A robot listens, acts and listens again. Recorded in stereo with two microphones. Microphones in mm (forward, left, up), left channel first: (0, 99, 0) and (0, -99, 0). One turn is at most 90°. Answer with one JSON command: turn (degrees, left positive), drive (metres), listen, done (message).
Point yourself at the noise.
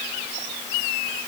{"listen": true}
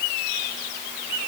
{"listen": true}
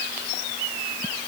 {"done": "I can't make out anything."}